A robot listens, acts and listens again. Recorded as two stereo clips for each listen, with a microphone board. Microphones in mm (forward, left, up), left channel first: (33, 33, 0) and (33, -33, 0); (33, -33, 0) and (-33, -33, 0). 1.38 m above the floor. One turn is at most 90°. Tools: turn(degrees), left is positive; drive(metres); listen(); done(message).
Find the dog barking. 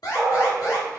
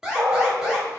turn(degrees=90)
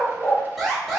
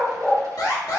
turn(degrees=80)
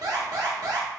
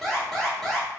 listen()
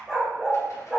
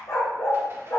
done("Found it: a dog barking, straight ahead, 1 to 2 m away.")